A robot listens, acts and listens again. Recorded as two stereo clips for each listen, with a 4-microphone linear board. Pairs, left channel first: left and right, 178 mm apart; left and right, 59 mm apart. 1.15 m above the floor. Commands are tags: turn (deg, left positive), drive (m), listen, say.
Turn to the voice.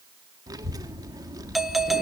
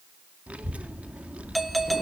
<turn deg="-20"/>
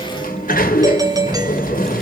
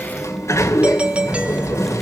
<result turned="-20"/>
<say>Found it: a child speaking, straight ahead.</say>